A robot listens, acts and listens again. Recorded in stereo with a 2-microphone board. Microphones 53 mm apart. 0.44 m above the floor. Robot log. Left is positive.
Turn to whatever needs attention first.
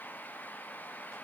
cmd idle
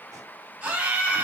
note: The scream: about 30° right or 150° right.
cmd yaw -30
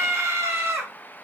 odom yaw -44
note: So it is at 100° right.
cmd yaw -100
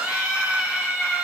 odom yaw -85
note: The scream is now 15° right.
cmd yaw -15
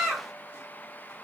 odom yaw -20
end: Found it: a scream, straight ahead.